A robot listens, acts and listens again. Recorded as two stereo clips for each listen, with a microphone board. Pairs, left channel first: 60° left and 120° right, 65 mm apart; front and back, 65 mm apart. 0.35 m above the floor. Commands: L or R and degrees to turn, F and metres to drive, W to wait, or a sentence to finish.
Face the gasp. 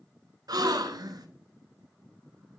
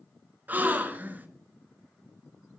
R115
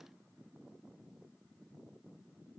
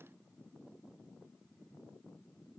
Facing where the gasp came from. I can't hear it now.